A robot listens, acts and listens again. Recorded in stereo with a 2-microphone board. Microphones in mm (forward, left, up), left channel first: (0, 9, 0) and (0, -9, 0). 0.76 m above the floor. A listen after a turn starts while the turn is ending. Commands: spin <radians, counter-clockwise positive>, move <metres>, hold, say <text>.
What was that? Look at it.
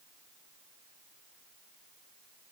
hold
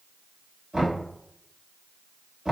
spin -0.96
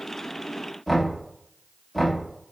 say Facing the knocking.